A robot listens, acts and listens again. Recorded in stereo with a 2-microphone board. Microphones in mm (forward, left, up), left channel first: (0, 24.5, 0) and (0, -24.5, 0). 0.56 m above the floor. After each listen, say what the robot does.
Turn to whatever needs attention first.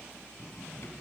Keep listening.
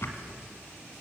Keep listening.
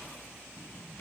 I can't make out anything urgent, only a drawer.